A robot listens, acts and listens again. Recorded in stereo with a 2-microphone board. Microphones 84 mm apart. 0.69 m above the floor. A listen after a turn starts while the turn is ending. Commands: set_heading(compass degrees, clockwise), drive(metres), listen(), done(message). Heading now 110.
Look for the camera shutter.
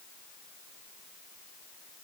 listen()
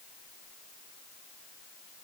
listen()
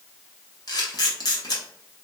set_heading(60)
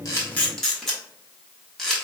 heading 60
done("Facing the camera shutter.")